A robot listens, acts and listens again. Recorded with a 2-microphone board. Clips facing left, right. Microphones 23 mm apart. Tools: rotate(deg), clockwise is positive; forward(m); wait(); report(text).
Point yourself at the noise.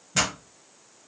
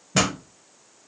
rotate(15)
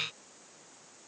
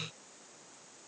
wait()
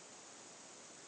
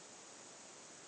report("I heard a pop, but can't make it out now. It was about straight ahead or 150° right.")